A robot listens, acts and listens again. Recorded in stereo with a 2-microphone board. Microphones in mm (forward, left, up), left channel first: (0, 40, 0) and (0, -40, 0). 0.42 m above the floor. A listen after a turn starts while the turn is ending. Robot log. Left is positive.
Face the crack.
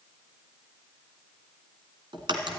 cmd yaw -90
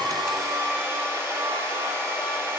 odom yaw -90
end: I heard a crack from this way, but can't make it out now.